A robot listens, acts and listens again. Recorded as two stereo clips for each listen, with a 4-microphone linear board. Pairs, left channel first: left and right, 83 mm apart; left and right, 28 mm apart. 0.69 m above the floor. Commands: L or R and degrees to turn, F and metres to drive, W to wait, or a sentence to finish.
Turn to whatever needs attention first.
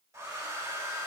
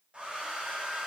W
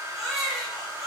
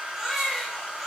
L30
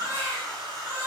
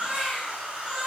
R30
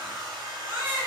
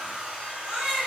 R25
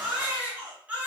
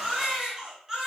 R15
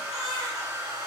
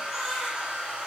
Found it: a baby crying, straight ahead, 2 to 4 m away.